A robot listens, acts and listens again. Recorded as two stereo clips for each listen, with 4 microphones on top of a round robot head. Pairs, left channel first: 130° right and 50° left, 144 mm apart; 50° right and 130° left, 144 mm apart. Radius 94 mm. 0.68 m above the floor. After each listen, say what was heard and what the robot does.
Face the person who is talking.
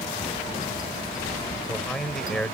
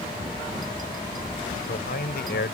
The man speaking: 45° right. Turn 45° right.
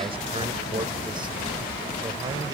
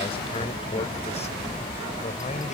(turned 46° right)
Keep listening.
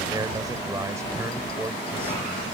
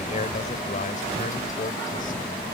The man speaking is now 20° right. Turn 20° right.
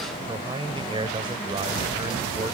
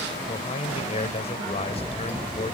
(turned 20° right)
Found it: a man speaking, straight ahead.